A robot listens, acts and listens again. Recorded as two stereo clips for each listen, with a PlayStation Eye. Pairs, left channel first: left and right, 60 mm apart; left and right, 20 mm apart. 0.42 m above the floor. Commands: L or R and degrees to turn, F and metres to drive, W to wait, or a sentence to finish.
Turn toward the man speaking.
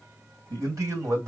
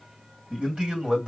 R60
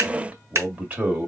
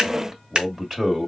R25
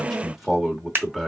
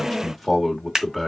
Facing the man speaking.